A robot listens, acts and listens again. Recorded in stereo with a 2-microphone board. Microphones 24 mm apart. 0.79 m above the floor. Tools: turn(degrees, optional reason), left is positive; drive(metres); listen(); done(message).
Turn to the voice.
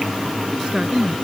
turn(degrees=-45, reason="The woman speaking: about 45° right or 135° right.")
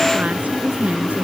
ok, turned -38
turn(degrees=-100, reason="So it is at 100° right.")
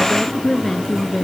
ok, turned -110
turn(degrees=10, reason="The woman speaking is now 10° left.")
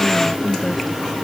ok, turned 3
done("Facing the woman speaking.")